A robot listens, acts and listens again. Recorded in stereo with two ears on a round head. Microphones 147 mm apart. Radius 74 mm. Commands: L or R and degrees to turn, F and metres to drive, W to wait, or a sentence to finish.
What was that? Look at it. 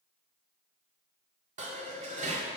R45
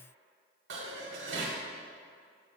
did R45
R90
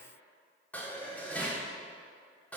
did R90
L10
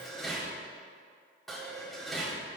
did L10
Facing the dishes clattering, 2 to 4 m away.